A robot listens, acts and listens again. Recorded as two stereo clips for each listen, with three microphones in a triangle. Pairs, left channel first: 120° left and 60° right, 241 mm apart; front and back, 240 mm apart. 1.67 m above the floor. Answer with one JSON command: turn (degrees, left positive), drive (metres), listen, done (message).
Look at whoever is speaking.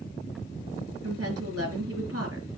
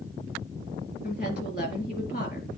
{"turn": -50}
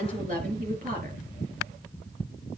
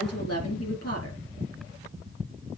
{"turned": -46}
{"done": "Found it: a woman speaking, straight ahead, over 4 m away."}